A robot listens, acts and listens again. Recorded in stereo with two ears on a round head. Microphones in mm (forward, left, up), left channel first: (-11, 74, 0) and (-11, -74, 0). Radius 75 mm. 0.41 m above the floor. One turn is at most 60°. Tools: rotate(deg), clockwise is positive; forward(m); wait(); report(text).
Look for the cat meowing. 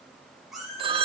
rotate(-30)
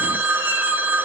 wait()
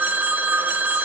wait()
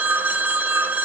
report("I heard a cat meowing, but can't make it out now. It was about 30° right or 150° left.")